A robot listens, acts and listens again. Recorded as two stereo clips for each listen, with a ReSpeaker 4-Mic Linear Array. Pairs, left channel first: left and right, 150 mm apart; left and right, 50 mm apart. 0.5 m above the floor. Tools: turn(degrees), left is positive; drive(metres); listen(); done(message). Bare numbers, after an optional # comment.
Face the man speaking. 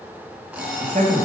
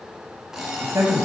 # The man speaking: about 55° right or 125° right.
turn(-55)
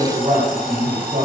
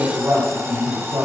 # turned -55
# So it is at 55° right.
turn(-55)
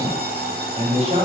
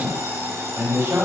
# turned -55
# The man speaking is now 45° right.
turn(-45)
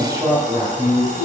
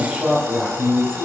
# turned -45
# The man speaking is now 25° right.
turn(-25)
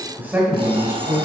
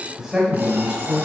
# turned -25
# The man speaking is now 15° right.
turn(-15)
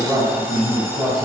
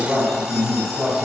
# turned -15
done("Facing the man speaking.")